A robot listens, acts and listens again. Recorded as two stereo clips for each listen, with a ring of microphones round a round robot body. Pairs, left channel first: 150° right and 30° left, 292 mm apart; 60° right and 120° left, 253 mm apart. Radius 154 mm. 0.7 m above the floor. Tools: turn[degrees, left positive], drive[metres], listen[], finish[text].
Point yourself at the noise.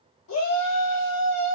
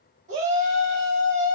Thought: The shout: straight behind.
Action: turn[180]
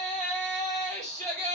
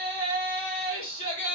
Thought: The shout is now 35° right.
Action: turn[-35]
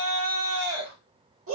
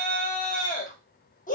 Action: finish[Facing the shout.]